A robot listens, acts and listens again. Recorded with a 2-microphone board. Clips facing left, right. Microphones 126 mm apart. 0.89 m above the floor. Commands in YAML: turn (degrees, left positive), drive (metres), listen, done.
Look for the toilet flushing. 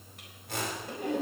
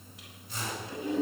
turn: 60
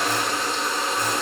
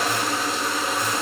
done: "Facing the toilet flushing, over 4 m away."